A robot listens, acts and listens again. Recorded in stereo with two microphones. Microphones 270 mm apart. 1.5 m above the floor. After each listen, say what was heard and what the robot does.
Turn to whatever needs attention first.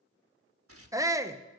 Turn 30° right.
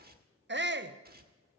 So it is at 135° right. Turn 135° right.
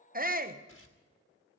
The shout is now 35° right. Turn 35° right.
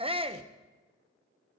The shout is now 20° right. Turn 20° right.
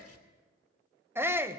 The shout is now 10° right. Turn 10° right.
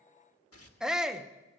Facing the shout.